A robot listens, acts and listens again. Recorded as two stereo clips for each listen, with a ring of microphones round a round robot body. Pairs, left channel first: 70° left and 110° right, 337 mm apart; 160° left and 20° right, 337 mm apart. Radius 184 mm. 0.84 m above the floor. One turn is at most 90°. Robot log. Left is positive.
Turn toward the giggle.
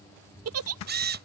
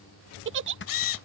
note: The giggle: 75° right.
cmd yaw -75
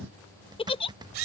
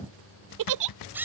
end: Facing the giggle.